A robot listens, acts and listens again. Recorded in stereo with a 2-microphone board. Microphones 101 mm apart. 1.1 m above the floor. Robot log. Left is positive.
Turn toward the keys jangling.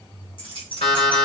note: The keys jangling: about 55° left or 125° left.
cmd yaw +55
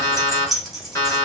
end: Facing the keys jangling, 1 to 2 m away.